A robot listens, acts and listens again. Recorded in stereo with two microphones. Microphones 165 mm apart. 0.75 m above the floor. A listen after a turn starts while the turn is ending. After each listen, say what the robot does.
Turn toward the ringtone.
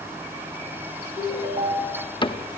Turn 35° right.
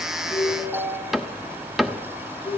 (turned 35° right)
Found it: a ringtone, straight ahead.